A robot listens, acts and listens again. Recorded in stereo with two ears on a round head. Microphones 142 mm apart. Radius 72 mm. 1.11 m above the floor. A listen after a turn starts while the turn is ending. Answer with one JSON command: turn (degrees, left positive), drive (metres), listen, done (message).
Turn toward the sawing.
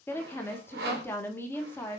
{"turn": -65}
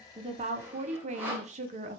{"turn": -15}
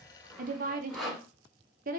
{"done": "Found it: sawing, straight ahead."}